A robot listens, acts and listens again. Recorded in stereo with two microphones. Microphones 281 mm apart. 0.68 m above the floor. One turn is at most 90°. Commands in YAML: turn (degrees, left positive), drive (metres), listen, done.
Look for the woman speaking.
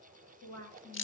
turn: 90
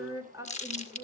turn: -15
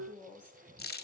done: "Found it: a woman speaking, straight ahead, over 4 m away."